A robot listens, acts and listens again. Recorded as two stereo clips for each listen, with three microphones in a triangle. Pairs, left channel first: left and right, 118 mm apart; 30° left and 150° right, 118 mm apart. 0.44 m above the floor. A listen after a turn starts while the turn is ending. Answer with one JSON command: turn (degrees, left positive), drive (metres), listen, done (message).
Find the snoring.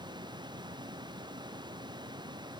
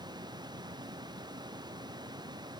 {"listen": true}
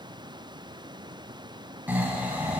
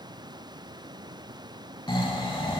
{"turn": -15}
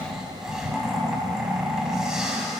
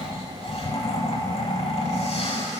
{"done": "Found it: snoring, straight ahead, 1 to 2 m away."}